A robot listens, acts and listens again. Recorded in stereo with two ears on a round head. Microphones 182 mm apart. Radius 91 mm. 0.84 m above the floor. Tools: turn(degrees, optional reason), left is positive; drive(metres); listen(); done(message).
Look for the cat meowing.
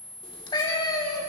turn(degrees=20, reason="The cat meowing: about 20° left or 160° left.")
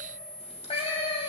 turn(degrees=30, reason="The cat meowing: about 30° left or 150° left.")
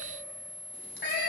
turn(degrees=125, reason="So it is at 125° left.")
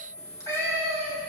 turn(degrees=15, reason="The cat meowing is now 15° left.")
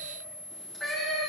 done("Found it: a cat meowing, straight ahead, over 4 m away.")